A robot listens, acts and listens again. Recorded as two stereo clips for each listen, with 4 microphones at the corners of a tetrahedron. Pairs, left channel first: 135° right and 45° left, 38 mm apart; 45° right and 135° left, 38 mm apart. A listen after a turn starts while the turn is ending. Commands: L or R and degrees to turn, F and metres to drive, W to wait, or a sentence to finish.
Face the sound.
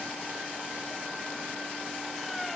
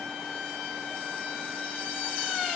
W
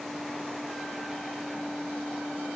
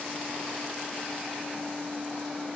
W
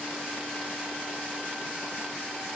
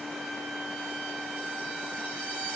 I can't make out anything to turn to.